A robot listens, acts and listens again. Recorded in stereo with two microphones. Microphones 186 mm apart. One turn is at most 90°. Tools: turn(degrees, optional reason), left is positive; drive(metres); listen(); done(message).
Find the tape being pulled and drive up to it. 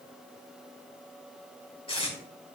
turn(degrees=30, reason="The tape being pulled: about 30° left or 150° left.")
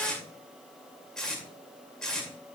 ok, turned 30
drive(metres=1.0)
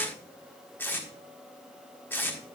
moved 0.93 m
turn(degrees=15, reason="The tape being pulled is now 15° left.")
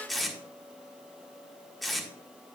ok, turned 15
drive(metres=1.0)
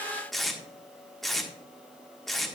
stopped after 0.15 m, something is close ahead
done("I am next to the tape being pulled.")